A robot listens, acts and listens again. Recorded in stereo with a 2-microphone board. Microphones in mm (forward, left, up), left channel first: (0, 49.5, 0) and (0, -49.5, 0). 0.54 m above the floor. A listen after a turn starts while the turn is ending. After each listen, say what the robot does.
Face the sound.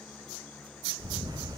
Turn 40° right.
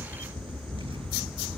Turn 90° right.
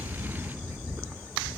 Turn 25° right.
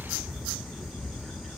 Facing the camera shutter.